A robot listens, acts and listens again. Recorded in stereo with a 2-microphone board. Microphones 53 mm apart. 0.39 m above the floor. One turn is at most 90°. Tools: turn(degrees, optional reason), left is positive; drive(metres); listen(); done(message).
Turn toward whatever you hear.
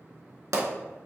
turn(degrees=-90)
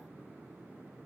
done("Facing where the pop came from. I can't hear it now.")